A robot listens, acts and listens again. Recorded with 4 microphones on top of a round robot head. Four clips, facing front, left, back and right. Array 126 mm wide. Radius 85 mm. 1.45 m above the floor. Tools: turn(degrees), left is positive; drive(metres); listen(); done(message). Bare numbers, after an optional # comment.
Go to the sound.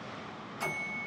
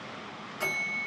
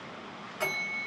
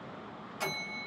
# The bell: 160° left.
turn(160)
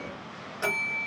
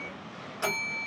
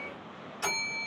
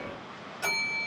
# The bell is now 35° left.
turn(35)
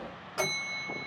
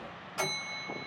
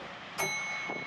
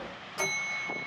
drive(1.0)
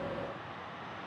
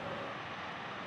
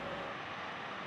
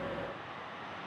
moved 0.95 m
listen()
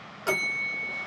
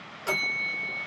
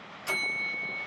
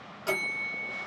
drive(1.0)
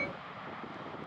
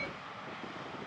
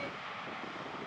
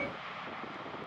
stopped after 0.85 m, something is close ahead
listen()
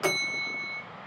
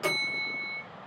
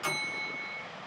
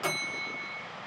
done("Arrived at the bell, straight ahead.")